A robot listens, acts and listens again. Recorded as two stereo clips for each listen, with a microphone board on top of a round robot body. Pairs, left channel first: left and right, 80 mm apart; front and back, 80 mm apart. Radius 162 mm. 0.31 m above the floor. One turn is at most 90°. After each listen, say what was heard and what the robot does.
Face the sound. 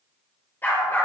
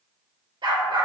The dog barking: 150° left. Turn 90° left.
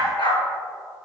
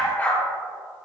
The dog barking is now 65° left. Turn 65° left.
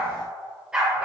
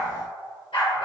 The dog barking is now 15° right. Turn 15° right.
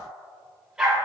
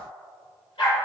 The dog barking is now 10° right. Turn 10° right.
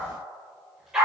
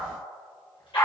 The dog barking is now 10° right. Turn 10° right.
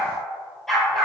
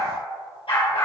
Facing the dog barking, 2 to 4 m away.